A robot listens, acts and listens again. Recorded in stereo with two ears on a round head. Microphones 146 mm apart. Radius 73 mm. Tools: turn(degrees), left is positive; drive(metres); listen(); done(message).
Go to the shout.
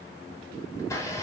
listen()
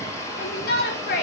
turn(degrees=60)
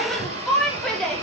drive(metres=1.0)
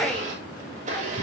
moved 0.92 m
listen()
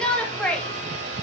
drive(metres=1.0)
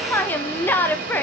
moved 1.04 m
turn(degrees=10)
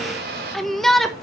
drive(metres=1.0)
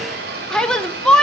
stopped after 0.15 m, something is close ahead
done("I am next to the shout.")